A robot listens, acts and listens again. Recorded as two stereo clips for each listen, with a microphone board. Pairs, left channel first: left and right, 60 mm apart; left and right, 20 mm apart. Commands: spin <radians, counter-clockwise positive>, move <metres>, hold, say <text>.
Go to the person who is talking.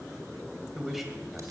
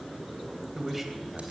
spin -0.52
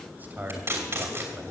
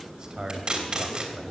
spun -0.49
spin -2.62
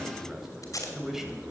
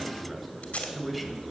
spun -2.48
move 1.0
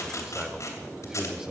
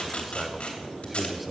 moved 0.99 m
spin -0.17
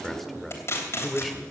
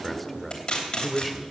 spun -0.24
move 1.0
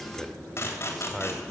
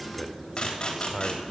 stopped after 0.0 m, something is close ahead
say Arrived at the man speaking, straight ahead.